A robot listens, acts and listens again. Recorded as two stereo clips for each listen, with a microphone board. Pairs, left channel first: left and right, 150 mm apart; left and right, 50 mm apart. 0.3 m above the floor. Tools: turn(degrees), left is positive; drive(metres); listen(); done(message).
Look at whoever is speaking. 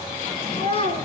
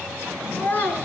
turn(degrees=40)
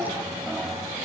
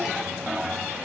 listen()
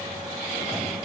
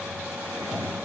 listen()
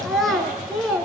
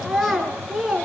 done("Facing the child speaking, 2 to 4 m away.")